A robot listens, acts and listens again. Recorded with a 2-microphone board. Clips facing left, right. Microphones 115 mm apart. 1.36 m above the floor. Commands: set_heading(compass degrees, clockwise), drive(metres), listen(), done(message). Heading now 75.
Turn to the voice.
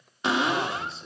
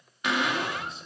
set_heading(45)
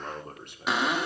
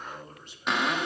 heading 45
set_heading(285)
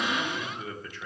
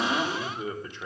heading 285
set_heading(310)
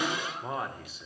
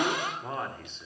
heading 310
done("Found it: a man speaking, straight ahead.")